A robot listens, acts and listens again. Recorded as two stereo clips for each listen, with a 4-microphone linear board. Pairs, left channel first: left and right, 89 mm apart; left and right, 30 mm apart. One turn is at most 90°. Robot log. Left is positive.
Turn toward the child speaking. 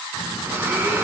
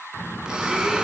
cmd yaw +30
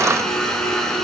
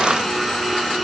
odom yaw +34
cmd idle
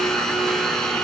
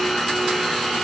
cmd idle
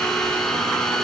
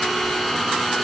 end: I heard a child speaking, but can't make it out now. It was about 20° right or 130° left.